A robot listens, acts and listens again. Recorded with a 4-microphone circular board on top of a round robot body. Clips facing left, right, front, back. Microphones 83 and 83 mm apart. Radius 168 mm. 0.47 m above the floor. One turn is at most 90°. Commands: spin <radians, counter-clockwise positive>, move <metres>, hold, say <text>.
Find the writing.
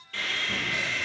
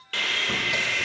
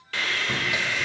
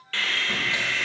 hold
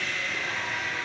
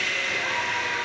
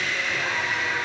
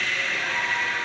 hold
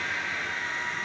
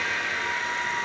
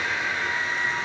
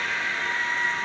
say I can't make out writing to turn to.